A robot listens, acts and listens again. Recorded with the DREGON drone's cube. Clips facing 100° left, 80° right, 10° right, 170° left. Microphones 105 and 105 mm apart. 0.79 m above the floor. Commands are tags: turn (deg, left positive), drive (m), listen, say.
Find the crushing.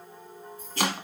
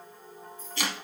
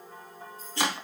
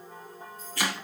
<listen/>
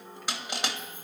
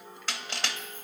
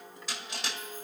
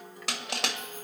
<turn deg="175"/>
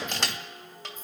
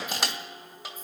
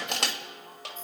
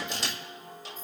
<say>Facing the crushing, 2 to 4 m away.</say>